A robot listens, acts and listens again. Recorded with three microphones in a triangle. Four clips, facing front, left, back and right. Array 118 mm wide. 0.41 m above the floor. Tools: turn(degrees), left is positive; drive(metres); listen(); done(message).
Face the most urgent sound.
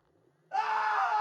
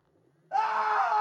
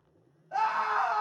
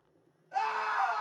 turn(degrees=90)
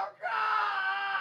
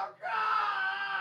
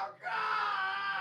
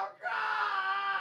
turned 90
done("Found it: a scream, straight ahead.")